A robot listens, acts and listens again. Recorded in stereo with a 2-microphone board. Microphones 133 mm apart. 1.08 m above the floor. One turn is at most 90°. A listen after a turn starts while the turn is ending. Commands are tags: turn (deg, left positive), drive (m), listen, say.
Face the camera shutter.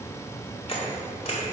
<turn deg="50"/>
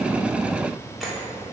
<say>Found it: a camera shutter, straight ahead.</say>